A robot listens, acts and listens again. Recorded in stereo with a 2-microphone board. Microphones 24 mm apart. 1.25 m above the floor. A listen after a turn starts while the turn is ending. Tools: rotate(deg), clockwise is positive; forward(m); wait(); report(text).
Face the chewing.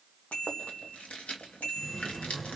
rotate(-55)
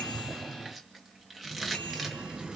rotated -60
report("Facing the chewing.")